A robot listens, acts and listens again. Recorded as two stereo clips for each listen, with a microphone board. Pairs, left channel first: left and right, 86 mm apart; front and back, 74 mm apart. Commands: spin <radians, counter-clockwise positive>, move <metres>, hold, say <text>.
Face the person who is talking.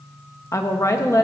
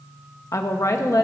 spin 0.70
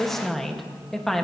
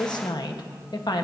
say Facing the woman speaking.